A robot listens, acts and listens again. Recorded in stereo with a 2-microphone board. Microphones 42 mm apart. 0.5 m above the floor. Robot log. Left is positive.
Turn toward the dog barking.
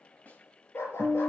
note: The dog barking: about 75° left or 105° left.
cmd yaw +75
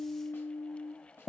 cmd idle
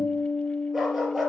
end: Facing the dog barking, 2 to 4 m away.